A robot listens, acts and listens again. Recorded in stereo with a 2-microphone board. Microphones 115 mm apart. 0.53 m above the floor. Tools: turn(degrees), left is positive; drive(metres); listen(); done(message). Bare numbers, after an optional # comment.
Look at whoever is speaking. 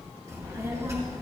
# The child speaking: about 25° right or 155° right.
turn(-25)
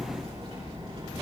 # So it is at 130° right.
turn(-130)
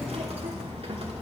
# The child speaking is now 55° right.
turn(-55)
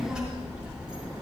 done("Found it: a child speaking, straight ahead.")